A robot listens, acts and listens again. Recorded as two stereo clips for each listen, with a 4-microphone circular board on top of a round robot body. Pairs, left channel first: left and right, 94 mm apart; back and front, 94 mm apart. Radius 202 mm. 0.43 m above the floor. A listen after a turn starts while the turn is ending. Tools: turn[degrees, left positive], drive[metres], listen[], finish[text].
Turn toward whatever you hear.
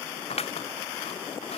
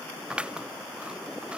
Thought: The scissors: 80° left.
Action: turn[80]
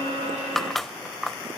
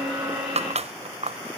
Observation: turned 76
Action: finish[Facing the scissors.]